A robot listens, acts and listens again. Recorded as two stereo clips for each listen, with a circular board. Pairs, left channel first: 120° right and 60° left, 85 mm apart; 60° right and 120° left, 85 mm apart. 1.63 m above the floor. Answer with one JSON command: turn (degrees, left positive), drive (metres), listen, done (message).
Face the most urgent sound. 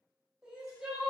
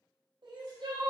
{"turn": 140}
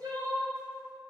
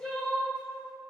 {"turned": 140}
{"turn": 25}
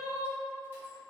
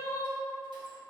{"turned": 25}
{"done": "Found it: crying, straight ahead, under 1 m away."}